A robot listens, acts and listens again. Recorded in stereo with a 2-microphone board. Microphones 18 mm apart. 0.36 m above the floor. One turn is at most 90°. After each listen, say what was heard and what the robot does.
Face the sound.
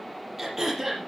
The throat clearing: about 20° right or 160° right. Turn 20° right.
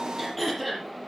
Found it: throat clearing, straight ahead, over 4 m away.